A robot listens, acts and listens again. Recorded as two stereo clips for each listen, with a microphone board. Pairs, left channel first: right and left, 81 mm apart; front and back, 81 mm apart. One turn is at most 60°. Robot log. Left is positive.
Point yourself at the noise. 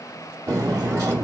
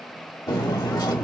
note: The cutlery clinking: 45° left.
cmd yaw +45
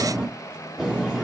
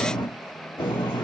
note: The cutlery clinking is now 10° left.
cmd yaw +10
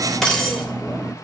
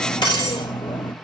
end: Found it: cutlery clinking, straight ahead.